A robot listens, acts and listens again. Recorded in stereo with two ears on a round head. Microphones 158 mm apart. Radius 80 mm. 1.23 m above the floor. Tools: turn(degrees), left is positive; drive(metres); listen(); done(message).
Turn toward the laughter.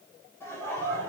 turn(degrees=30)
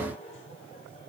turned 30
turn(degrees=145)
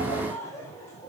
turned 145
turn(degrees=20)
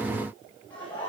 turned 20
turn(degrees=10)
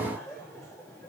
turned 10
done("Facing the laughter, over 4 m away.")